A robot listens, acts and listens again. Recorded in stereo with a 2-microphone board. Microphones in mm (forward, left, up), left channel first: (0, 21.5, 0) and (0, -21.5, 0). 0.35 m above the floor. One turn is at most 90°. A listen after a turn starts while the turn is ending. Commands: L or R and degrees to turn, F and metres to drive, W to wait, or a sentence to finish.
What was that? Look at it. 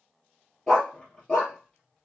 L20
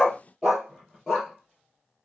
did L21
L30
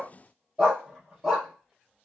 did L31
R15
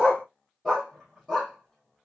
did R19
Facing the dog barking, 2 to 4 m away.